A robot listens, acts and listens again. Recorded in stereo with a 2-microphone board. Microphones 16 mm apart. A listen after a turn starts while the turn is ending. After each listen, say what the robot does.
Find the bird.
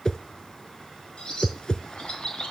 Turn 70° left.
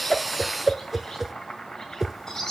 Turn 30° left.
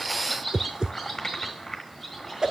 Found it: a bird, straight ahead, 2 to 4 m away.